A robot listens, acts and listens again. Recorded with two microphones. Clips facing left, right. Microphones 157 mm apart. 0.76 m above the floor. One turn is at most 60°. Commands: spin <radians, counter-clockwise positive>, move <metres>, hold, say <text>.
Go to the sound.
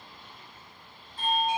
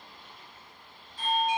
spin 0.96
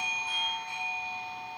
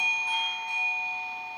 spin 0.17
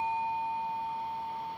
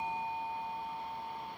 move 1.0
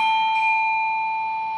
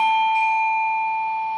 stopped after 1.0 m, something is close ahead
say I am next to the doorbell.